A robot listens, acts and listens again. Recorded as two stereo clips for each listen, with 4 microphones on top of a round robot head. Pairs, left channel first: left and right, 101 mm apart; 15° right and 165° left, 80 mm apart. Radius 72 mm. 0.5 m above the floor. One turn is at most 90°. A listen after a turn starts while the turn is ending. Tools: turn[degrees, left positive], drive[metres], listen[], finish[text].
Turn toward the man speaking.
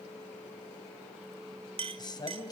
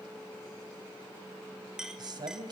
Thought: The man speaking: 140° left.
Action: turn[90]
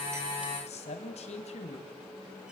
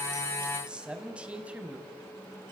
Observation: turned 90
Thought: The man speaking is now 95° left.
Action: turn[90]
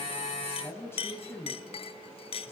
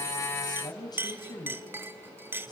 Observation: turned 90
Thought: The man speaking is now 20° left.
Action: turn[20]
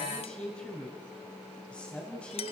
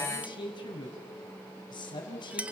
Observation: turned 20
Thought: The man speaking is now 10° left.
Action: turn[10]
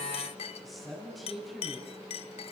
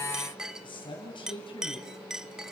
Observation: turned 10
Action: finish[Found it: a man speaking, straight ahead, over 4 m away.]